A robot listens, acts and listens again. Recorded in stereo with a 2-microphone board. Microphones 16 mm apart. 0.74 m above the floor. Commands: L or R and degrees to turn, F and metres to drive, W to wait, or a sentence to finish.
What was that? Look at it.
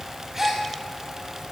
R25
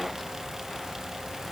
W
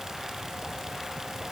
I heard a gasp, but can't make it out now. It was about straight ahead or 130° right.